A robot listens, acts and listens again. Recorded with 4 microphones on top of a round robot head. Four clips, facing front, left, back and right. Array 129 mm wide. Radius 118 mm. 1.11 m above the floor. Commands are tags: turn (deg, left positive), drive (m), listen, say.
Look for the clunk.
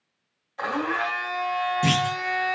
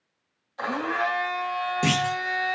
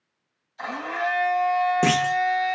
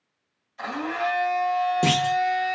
<turn deg="-155"/>
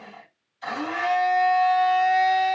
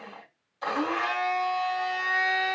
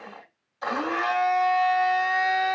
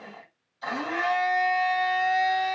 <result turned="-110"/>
<turn deg="-45"/>
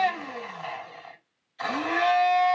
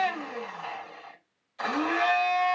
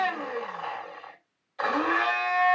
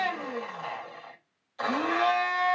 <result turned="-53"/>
<say>Facing where the clunk came from. I can't hear it now.</say>